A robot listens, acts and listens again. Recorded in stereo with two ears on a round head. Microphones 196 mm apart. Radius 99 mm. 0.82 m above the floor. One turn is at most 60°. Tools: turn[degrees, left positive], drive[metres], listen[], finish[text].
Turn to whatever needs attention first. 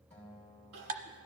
Action: turn[-60]
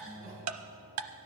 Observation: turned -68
Thought: Nothing new. It was at 20° right.
Action: turn[-20]
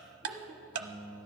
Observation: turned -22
Thought: The crying is now 15° right.
Action: turn[-15]
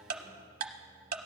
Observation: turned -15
Action: listen[]
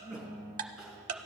Action: finish[Facing the crying, 2 to 4 m away.]